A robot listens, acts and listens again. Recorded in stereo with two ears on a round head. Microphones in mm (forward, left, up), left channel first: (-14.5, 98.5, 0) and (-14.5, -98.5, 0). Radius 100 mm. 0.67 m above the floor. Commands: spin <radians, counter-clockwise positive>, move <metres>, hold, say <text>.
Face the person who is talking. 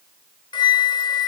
hold
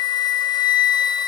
hold
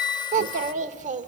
spin -0.61
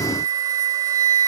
hold
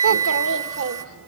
spin -1.83
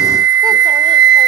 hold
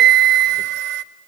hold
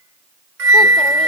say I heard a child speaking from this way, but can't make it out now.